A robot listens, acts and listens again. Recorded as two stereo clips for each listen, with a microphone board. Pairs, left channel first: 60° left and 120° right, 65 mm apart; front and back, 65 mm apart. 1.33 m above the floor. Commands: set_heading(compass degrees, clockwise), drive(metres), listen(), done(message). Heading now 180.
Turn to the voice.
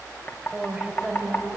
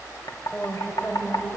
set_heading(225)
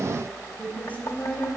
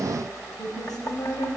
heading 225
done("Facing the woman speaking, over 4 m away.")